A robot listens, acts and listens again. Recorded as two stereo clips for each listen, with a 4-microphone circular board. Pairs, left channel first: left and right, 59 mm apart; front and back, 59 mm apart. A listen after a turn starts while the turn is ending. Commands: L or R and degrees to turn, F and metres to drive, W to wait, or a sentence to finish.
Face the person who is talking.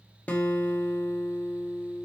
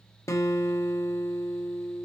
W
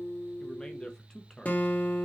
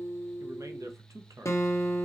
L165
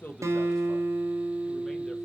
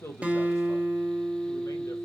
W
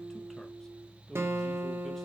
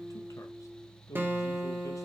L10
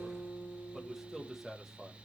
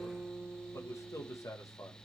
Facing the man speaking.